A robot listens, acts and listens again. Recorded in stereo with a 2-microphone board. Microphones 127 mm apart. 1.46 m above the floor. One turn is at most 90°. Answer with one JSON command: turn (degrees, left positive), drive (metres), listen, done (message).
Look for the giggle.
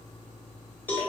{"listen": true}
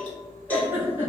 {"turn": -20}
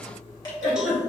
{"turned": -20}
{"done": "Facing the giggle, 1 to 2 m away."}